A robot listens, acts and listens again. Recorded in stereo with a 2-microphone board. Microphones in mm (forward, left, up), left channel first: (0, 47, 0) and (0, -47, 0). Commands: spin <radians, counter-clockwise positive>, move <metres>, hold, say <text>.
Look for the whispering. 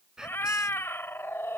spin -0.52
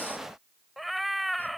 hold
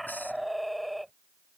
hold
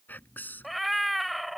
spin 0.35
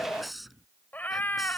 say Found it: whispering, straight ahead.